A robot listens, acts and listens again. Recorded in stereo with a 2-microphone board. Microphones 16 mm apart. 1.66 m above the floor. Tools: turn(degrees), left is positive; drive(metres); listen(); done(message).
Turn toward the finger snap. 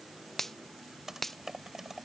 turn(degrees=20)
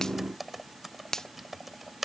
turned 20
turn(degrees=135)
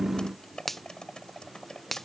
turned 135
turn(degrees=15)
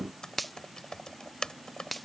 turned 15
done("Found it: a finger snap, straight ahead.")